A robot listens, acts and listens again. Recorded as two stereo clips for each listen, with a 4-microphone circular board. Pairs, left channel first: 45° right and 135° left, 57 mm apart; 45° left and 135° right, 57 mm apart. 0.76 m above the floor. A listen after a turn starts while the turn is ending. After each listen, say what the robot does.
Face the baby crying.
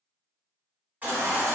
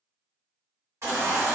Turn 165° right.
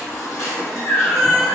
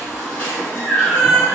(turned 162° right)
Found it: a baby crying, straight ahead.